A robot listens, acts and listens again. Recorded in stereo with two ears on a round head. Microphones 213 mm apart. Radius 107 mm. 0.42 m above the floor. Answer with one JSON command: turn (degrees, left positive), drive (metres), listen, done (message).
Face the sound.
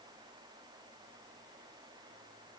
{"listen": true}
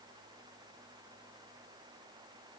{"listen": true}
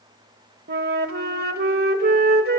{"turn": -40}
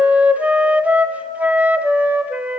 {"done": "Found it: a flute, straight ahead."}